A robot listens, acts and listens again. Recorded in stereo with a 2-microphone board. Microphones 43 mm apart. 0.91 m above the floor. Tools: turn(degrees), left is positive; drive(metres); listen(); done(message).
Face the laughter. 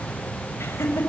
turn(degrees=90)
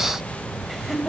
done("Facing the laughter, over 4 m away.")